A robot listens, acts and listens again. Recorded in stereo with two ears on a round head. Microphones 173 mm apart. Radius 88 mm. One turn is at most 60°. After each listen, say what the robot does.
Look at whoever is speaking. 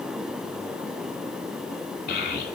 Turn 55° left.
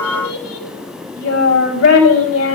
Turn 60° left.
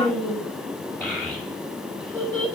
Facing the child speaking, over 4 m away.